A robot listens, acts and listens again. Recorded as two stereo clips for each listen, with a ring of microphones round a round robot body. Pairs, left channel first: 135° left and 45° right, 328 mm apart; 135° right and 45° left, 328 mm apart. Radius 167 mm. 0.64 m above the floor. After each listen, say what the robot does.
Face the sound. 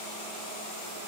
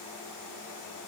Keep listening.
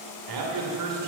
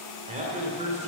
Turn 25° right.
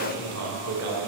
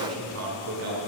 Found it: a man speaking, straight ahead, 2 to 4 m away.